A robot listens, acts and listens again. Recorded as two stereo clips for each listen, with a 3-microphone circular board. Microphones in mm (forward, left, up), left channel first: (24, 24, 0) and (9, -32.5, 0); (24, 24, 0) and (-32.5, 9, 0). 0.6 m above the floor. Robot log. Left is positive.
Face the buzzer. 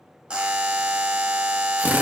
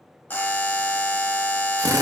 note: The buzzer: 40° right.
cmd yaw -40
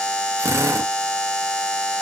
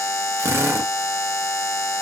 end: Facing the buzzer, under 1 m away.